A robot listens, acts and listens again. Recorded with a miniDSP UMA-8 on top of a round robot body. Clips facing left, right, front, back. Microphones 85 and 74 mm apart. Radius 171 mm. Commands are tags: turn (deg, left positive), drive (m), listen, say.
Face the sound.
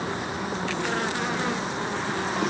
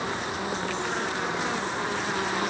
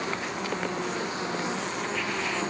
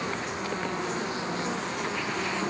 <listen/>
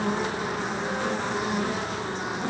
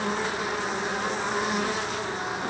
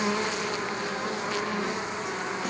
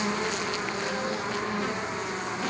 <listen/>
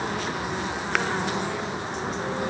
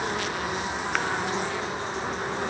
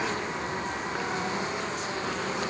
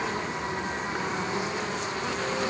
<say>I can't make out anything.</say>